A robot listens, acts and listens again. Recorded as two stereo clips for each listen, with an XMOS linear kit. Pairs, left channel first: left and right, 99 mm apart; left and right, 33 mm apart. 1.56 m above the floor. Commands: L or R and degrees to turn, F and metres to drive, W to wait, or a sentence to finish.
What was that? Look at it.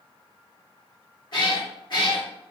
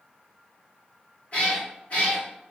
L50
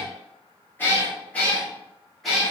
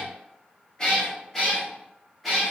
Found it: a cat meowing, straight ahead.